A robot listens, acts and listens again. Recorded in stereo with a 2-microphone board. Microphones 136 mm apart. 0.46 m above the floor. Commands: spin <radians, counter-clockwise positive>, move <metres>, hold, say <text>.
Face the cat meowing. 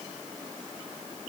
hold
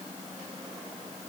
hold
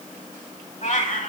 spin 1.22
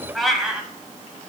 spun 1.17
say Found it: a cat meowing, straight ahead, 1 to 2 m away.